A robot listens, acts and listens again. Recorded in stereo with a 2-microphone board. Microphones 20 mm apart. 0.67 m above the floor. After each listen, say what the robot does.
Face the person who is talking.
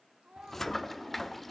Turn 75° right.
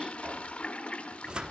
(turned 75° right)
Keep listening.
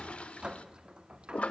Keep listening.
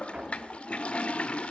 I heard a child speaking, but can't make it out now. It was about straight ahead or 30° right.